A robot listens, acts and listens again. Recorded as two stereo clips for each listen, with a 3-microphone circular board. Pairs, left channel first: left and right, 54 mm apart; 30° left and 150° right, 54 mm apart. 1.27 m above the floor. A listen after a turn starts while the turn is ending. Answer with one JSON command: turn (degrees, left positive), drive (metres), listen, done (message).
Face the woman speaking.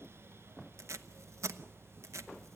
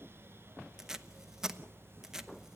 {"listen": true}
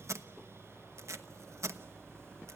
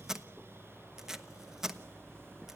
{"listen": true}
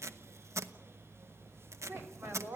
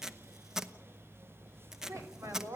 {"turn": -130}
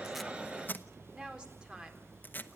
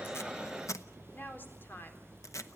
{"turn": -20}
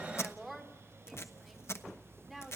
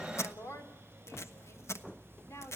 {"done": "Facing the woman speaking."}